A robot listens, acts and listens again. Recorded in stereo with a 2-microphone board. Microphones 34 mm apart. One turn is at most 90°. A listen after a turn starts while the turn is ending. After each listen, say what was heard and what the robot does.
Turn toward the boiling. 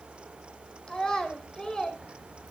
Keep listening.
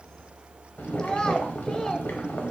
Turn 90° left.
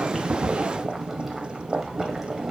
So it is at 10° right. Turn 10° right.
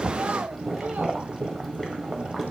Facing the boiling.